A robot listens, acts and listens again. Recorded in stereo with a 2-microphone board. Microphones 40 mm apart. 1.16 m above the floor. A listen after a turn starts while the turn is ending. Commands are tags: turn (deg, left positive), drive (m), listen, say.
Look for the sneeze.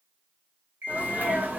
<turn deg="-45"/>
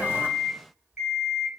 <listen/>
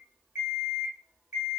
<say>I heard a sneeze, but can't make it out now. It was about straight ahead or 90° right.</say>